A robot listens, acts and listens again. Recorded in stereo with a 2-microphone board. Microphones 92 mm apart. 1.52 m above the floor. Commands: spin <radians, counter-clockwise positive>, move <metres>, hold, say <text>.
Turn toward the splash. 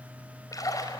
spin 0.70
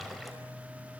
hold
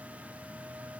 say I heard a splash, but can't make it out now. It was about straight ahead or 100° left.